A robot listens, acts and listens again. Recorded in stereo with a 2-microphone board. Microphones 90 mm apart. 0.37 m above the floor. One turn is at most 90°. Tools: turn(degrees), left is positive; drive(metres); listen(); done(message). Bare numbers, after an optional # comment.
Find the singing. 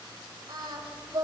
# The singing: about 50° right or 130° right.
turn(-50)
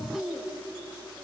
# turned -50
done("Found it: singing, straight ahead.")